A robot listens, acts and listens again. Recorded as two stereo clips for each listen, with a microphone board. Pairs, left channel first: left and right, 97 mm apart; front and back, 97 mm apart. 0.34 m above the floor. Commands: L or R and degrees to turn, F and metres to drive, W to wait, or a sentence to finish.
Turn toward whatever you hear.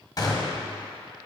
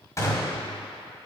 L50
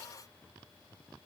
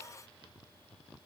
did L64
R10
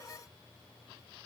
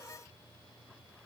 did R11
Facing where the gunshot came from. I can't hear it now.